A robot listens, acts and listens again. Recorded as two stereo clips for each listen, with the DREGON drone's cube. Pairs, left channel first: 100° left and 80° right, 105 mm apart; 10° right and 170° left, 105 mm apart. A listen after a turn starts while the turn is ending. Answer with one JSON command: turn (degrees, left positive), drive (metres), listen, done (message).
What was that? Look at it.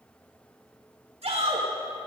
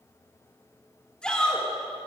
{"turn": -90}
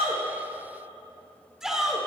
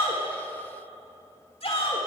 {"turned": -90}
{"done": "Found it: a shout, straight ahead."}